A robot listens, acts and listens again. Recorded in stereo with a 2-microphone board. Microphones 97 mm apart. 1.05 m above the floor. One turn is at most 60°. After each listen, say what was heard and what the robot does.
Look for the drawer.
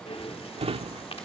Turn 60° right.
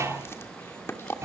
So it is at 30° right. Turn 30° right.
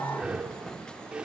Keep listening.
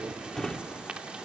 Facing the drawer, 1 to 2 m away.